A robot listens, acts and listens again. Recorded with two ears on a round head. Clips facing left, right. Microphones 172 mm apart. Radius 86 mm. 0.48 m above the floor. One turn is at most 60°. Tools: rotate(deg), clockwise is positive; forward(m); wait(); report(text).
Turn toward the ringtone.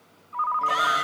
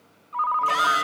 rotate(45)
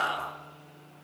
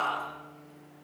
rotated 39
wait()
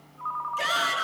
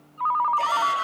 rotate(60)
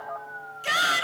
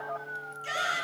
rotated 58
rotate(30)
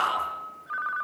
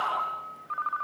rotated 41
rotate(-10)
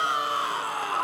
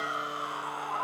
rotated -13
report("Facing the ringtone, under 1 m away.")